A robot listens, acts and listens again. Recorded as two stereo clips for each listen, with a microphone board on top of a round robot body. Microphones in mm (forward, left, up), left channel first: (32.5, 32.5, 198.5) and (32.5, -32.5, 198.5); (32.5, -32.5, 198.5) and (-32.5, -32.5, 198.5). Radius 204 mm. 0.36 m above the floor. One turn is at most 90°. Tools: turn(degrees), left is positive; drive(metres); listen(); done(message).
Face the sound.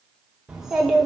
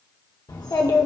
done("Found it: a child speaking, straight ahead, 1 to 2 m away.")